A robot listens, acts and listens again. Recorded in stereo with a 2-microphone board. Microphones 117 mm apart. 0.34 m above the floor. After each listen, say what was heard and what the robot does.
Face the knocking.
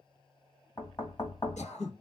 The knocking: about 35° left or 145° left. Turn 35° left.
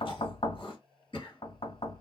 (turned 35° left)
So it is at 100° left. Turn 100° left.
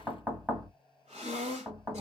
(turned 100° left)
The knocking is now 15° right. Turn 15° right.
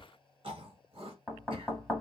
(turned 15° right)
Facing the knocking, 1 to 2 m away.